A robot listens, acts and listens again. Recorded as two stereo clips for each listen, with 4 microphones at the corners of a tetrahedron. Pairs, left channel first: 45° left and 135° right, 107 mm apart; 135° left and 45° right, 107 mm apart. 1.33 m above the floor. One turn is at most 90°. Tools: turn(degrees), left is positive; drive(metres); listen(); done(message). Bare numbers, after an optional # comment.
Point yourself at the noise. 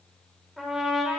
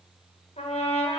# The trumpet: 135° left.
turn(90)
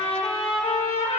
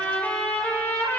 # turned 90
# The trumpet is now 60° left.
turn(60)
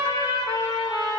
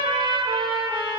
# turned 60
done("Facing the trumpet.")